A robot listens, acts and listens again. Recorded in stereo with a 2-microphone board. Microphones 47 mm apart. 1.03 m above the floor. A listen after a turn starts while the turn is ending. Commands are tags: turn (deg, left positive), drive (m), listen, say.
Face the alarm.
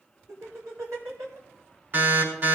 <turn deg="-45"/>
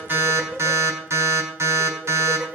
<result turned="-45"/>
<turn deg="-90"/>
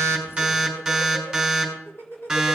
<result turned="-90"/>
<say>Facing the alarm.</say>